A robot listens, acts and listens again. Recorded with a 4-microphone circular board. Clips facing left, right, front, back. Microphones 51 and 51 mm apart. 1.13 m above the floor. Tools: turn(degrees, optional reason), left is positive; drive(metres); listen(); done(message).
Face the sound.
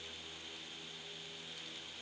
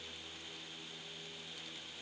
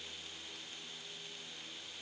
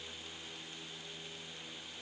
listen()
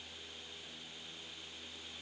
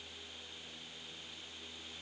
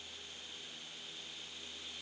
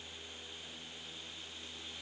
listen()
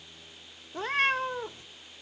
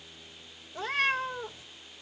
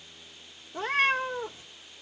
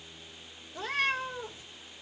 turn(degrees=50, reason="The cat meowing: 50° left.")
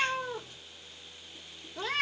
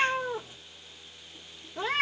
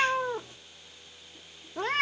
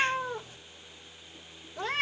turn(degrees=-20, reason="The cat meowing is now 20° right.")
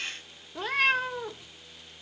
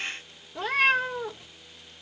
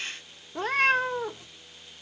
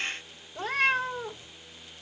done("Facing the cat meowing.")